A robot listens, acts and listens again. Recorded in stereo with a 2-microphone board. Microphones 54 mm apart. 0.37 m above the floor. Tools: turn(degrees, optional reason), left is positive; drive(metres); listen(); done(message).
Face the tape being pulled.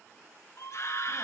listen()
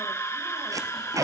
turn(degrees=-90)
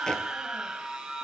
listen()
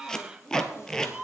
turn(degrees=10, reason="The tape being pulled is now 10° left.")
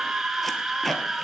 done("Found it: tape being pulled, straight ahead, 1 to 2 m away.")